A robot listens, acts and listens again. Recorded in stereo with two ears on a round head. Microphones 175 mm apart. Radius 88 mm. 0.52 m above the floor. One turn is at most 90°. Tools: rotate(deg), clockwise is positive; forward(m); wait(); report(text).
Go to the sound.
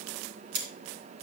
rotate(60)
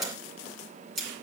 forward(1.0)
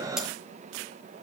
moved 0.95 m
wait()
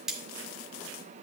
forward(1.0)
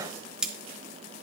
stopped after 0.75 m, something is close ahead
report("Arrived at the cutlery clinking, straight ahead.")